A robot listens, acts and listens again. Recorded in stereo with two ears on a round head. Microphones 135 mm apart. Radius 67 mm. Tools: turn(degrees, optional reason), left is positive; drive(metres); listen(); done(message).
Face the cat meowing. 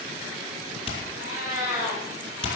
turn(degrees=-20, reason="The cat meowing: about 20° right or 160° right.")
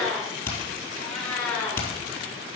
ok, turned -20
turn(degrees=10, reason="So it is at 10° left.")
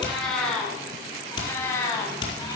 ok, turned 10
turn(degrees=20, reason="The cat meowing is now 20° left.")
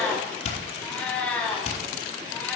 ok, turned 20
turn(degrees=10, reason="The cat meowing is now 10° left.")
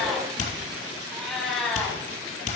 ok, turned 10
done("Found it: a cat meowing, straight ahead.")